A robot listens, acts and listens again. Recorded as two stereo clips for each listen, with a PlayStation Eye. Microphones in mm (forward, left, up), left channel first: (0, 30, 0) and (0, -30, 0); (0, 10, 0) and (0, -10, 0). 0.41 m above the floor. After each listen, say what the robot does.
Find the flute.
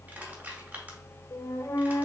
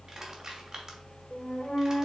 Turn 55° left.
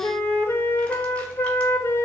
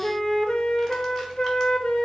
Turn 50° left.
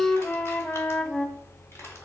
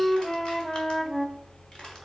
Turn 20° left.
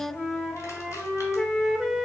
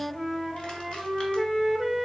Found it: a flute, straight ahead, under 1 m away.